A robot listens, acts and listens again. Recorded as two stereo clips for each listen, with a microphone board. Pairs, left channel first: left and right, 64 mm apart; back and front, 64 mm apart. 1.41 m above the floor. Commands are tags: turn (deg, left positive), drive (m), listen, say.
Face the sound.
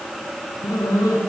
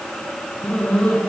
<turn deg="110"/>
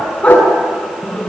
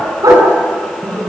<turn deg="20"/>
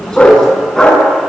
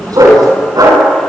<turn deg="10"/>
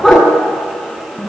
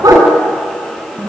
<say>Found it: a dog barking, straight ahead, over 4 m away.</say>